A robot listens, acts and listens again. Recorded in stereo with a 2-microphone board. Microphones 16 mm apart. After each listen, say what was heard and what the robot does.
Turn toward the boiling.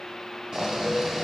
The boiling: about 45° right or 135° right. Turn 45° right.
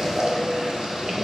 So it is at 80° right. Turn 80° right.
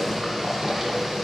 The boiling is now 25° right. Turn 25° right.
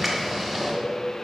Facing the boiling.